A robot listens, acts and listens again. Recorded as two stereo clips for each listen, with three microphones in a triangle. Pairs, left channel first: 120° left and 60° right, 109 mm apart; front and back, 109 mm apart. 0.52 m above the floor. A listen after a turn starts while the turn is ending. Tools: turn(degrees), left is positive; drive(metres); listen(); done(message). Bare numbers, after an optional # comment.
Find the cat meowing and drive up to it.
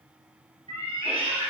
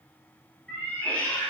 # The cat meowing: 80° right.
turn(-80)
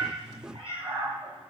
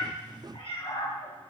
# The cat meowing is now 25° right.
turn(-25)
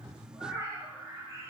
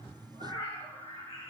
drive(1.0)
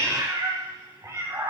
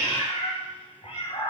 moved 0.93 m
drive(1.0)
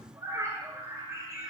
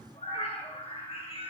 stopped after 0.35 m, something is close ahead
done("I am next to the cat meowing.")